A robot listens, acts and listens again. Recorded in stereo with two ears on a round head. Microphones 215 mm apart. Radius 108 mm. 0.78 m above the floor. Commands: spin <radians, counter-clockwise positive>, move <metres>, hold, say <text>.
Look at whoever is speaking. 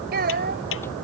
spin -0.79
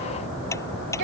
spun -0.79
spin -1.57
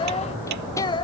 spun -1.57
spin 0.35
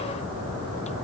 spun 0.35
hold
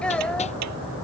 say Facing the child speaking.